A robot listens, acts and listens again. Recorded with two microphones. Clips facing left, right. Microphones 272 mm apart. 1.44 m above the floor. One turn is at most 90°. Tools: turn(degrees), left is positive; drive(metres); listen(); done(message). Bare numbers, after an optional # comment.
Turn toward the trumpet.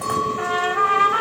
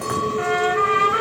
# The trumpet: about 25° right or 155° right.
turn(-25)
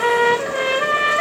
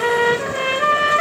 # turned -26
done("Facing the trumpet, 1 to 2 m away.")